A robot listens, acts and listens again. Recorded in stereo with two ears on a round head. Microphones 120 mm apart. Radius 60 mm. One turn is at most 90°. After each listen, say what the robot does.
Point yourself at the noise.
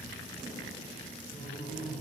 Turn 45° left.
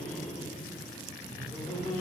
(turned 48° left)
Facing the laughter, 2 to 4 m away.